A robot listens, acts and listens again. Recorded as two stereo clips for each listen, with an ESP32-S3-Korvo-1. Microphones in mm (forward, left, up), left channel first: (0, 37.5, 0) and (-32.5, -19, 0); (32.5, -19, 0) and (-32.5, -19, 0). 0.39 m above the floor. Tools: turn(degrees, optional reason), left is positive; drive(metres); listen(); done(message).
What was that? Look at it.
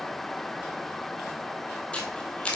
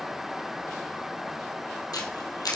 turn(degrees=-15, reason="The camera shutter: 15° right.")
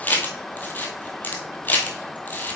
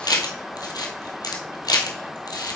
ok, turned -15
done("Found it: a camera shutter, straight ahead.")